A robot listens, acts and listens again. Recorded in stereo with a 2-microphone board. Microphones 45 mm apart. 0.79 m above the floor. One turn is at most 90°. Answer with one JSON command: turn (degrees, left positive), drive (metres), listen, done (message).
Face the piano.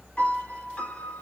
{"turn": 30}
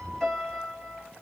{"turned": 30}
{"turn": 10}
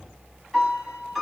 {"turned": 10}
{"done": "Found it: a piano, straight ahead, 1 to 2 m away."}